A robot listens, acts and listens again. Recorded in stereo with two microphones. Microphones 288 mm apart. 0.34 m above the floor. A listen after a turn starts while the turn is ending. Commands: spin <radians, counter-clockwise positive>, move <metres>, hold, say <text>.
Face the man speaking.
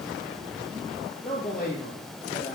spin 0.61
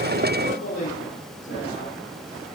spin 2.01
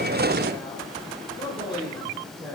spin 0.26
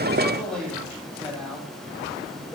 say Found it: a man speaking, straight ahead, over 4 m away.